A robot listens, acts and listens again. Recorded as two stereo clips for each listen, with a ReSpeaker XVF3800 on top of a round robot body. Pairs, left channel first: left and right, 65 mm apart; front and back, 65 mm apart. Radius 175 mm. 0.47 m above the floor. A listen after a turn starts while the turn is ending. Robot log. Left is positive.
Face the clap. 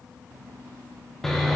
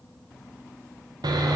cmd idle
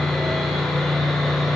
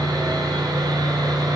cmd idle
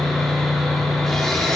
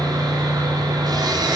end: I can't make out a clap, only sawing.